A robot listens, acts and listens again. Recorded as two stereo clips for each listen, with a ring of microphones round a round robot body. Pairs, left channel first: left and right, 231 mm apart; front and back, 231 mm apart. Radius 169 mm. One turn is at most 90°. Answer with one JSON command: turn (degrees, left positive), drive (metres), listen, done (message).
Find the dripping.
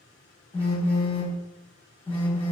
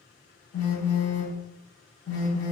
{"listen": true}
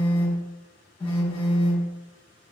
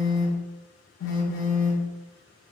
{"listen": true}
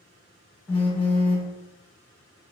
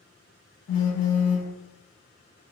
{"done": "I can't make out dripping to turn to."}